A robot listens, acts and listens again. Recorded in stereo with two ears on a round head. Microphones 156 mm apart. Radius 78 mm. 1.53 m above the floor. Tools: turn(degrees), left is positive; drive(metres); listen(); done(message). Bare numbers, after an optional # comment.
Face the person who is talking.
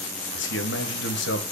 turn(90)
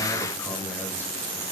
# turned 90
listen()
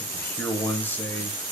# The man speaking is now 10° left.
turn(10)
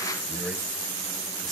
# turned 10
listen()
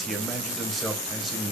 done("Found it: a man speaking, straight ahead.")